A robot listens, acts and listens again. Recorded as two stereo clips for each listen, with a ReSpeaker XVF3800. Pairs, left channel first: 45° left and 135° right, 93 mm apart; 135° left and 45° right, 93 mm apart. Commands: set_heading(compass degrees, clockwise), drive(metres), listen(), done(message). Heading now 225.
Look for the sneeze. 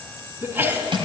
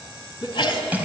set_heading(65)
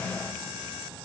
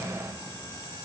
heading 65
done("I heard a sneeze from this way, but can't make it out now.")